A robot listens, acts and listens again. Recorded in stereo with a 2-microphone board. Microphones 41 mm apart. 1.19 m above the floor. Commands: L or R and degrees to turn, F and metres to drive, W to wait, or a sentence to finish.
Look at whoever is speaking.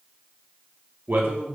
R60
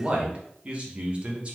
R35
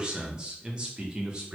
R30
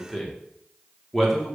Facing the man speaking, under 1 m away.